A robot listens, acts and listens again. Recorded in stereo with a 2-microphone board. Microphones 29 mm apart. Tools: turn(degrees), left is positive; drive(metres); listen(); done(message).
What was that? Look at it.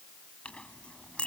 turn(degrees=45)
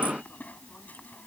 turn(degrees=90)
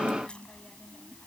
turn(degrees=35)
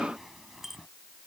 turn(degrees=-10)
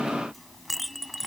done("Facing the clink.")